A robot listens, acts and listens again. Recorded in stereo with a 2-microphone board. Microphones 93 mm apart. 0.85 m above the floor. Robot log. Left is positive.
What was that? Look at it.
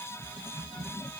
cmd idle
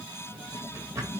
note: The drawer: about 30° right or 150° right.
cmd yaw -30
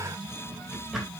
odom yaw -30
end: Facing the drawer.